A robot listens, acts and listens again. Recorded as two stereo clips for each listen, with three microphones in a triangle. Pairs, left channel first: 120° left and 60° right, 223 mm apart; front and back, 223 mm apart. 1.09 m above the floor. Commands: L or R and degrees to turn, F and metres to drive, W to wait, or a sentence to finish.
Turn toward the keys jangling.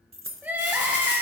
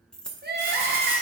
R85
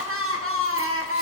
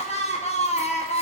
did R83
W
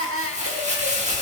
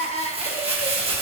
W
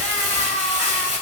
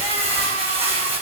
I heard keys jangling from this way, but can't make it out now.